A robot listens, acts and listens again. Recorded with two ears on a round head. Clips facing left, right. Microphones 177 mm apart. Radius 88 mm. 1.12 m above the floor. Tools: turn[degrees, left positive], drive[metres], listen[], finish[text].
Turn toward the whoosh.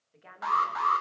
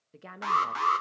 Action: listen[]
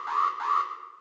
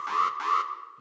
Action: listen[]
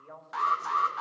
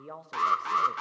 Action: finish[I can't make out a whoosh, only a woman speaking and an alarm.]